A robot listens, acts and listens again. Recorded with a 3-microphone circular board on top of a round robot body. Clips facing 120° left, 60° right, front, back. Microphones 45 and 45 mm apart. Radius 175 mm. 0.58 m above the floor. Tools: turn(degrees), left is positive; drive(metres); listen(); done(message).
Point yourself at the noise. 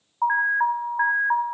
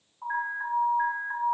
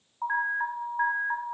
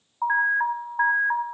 turn(degrees=115)
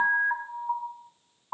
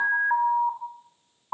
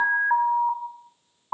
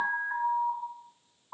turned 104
turn(degrees=10)
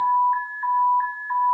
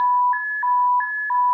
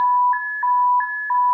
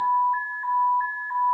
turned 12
done("Facing the alarm.")